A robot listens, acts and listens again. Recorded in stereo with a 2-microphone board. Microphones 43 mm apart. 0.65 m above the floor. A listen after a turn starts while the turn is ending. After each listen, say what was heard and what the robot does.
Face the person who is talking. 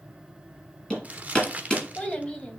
The child speaking: about 20° left or 160° left. Turn 20° left.
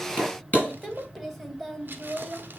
Found it: a child speaking, straight ahead, 2 to 4 m away.